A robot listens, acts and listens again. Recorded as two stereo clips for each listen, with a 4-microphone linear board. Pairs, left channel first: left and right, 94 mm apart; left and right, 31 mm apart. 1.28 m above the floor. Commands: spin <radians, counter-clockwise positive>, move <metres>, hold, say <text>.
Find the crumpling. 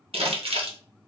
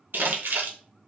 spin -1.57
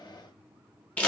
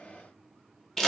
spin 0.26
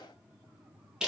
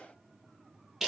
say Facing the crumpling.